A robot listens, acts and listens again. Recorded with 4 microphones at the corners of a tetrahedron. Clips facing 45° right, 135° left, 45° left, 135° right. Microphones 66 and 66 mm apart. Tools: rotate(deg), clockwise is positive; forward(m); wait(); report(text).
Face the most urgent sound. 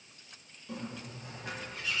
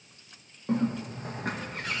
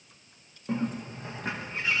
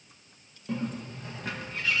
wait()
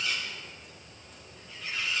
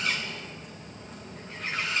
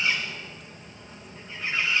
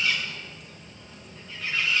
wait()
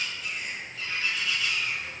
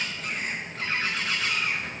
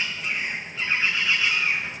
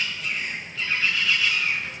report("I can't make out anything urgent, only a bird.")